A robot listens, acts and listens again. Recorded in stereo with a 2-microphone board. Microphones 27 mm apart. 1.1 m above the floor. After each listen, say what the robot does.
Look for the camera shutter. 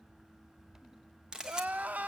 Turn 25° right.
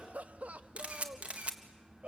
Turn 130° right.
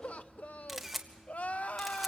Facing the camera shutter.